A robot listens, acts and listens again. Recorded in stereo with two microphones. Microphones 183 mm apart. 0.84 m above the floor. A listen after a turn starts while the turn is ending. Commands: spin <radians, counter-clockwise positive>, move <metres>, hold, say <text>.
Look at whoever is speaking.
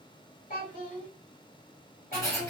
spin 0.87
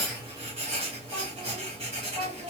say Found it: a child speaking, straight ahead, 2 to 4 m away.